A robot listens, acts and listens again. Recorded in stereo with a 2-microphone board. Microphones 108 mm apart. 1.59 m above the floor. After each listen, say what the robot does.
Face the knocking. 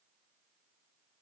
Keep listening.
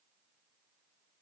Keep listening.
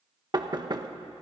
Turn 40° right.
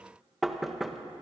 Found it: knocking, straight ahead, 1 to 2 m away.